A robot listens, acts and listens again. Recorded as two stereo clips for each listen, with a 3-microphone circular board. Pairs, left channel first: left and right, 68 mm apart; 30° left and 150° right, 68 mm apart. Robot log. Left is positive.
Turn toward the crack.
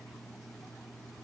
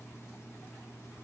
cmd idle
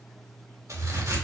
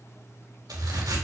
note: The crack: 135° right.
cmd yaw -135
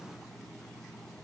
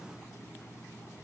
end: I heard a crack from this way, but can't make it out now.